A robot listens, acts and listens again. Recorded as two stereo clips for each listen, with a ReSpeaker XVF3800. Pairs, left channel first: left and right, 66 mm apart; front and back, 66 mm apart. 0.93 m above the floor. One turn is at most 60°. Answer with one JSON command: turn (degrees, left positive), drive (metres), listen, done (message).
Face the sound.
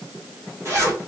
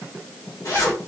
{"turn": -35}
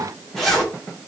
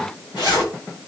{"done": "Facing the zipper, 1 to 2 m away."}